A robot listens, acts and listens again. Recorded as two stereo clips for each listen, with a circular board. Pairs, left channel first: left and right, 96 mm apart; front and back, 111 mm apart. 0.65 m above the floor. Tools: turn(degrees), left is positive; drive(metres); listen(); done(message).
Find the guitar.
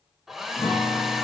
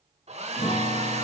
turn(degrees=30)
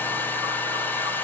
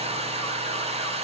listen()
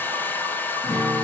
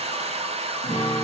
done("Found it: a guitar, straight ahead.")